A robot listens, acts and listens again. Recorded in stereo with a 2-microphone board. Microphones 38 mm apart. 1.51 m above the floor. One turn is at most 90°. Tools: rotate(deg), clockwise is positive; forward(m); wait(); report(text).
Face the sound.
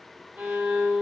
rotate(35)
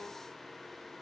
wait()
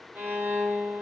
rotate(90)
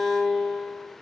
rotate(25)
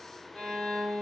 report("Found it: a violin, straight ahead, 1 to 2 m away.")